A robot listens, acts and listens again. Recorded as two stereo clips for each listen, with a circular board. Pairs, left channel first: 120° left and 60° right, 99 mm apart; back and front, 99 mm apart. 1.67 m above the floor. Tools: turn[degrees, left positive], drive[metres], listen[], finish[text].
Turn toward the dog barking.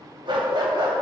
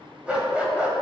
Thought: The dog barking: 75° right.
Action: turn[-75]
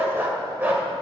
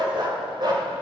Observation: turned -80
Action: finish[Facing the dog barking.]